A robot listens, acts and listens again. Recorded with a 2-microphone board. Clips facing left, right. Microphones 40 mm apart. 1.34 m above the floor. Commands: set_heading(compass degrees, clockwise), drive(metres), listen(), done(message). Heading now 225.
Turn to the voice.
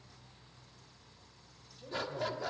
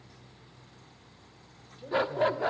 set_heading(240)
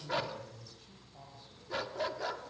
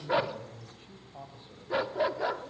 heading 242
set_heading(27)
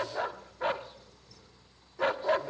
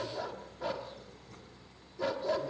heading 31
listen()
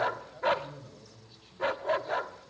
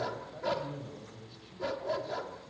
done("Found it: a man speaking, straight ahead.")